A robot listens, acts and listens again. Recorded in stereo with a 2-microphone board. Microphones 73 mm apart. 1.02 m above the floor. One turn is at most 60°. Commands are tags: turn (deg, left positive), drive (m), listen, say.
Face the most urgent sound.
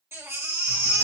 <turn deg="-35"/>
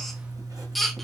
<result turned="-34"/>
<say>Facing the baby crying, 1 to 2 m away.</say>